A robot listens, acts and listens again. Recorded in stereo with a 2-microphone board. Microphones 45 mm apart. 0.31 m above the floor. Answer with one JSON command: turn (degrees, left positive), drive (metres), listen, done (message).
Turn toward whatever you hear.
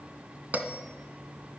{"turn": -40}
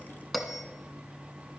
{"done": "Found it: a bell, straight ahead."}